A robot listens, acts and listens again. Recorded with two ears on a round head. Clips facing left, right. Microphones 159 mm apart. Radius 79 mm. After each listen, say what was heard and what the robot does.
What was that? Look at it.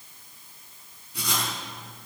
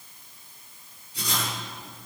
The writing: about 50° left or 130° left. Turn 50° left.
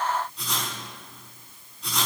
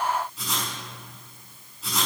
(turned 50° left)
Facing the writing.